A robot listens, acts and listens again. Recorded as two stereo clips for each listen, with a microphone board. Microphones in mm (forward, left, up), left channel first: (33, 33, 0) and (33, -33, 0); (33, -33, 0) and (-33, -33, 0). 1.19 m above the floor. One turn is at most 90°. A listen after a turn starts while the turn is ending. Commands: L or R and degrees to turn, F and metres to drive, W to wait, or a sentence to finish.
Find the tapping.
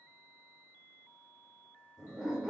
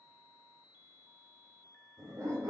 W
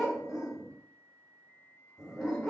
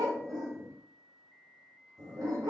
W
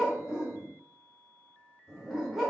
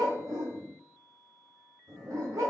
I can't make out tapping, only a dog barking.